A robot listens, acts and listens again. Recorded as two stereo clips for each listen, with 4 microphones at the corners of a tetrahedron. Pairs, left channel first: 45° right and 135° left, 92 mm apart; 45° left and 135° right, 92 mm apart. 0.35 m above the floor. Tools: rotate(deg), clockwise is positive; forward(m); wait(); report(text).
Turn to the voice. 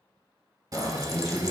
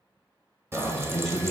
rotate(40)
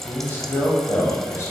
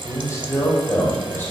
report("Facing the man speaking, 1 to 2 m away.")